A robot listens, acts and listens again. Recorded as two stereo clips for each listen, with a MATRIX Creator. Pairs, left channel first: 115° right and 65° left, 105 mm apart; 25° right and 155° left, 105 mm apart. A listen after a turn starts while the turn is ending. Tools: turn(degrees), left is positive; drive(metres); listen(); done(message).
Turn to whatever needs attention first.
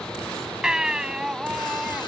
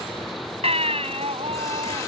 turn(degrees=150)
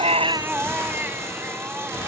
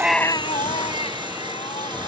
done("Facing the baby crying.")